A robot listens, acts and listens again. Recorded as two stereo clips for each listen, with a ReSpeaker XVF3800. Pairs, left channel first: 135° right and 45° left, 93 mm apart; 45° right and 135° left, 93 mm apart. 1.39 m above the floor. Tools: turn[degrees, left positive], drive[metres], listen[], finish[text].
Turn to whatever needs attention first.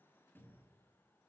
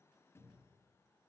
Action: listen[]
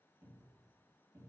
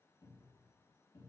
Action: listen[]
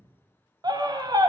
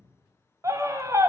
Thought: The scream: 80° left.
Action: turn[80]
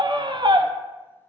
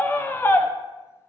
Thought: The scream is now 20° left.
Action: turn[20]
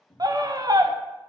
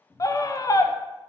Action: finish[Found it: a scream, straight ahead, under 1 m away.]